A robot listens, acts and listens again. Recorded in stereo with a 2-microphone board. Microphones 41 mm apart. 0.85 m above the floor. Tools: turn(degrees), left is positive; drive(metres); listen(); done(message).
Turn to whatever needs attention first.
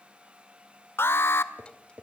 turn(degrees=70)
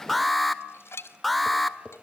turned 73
done("Facing the alarm, 1 to 2 m away.")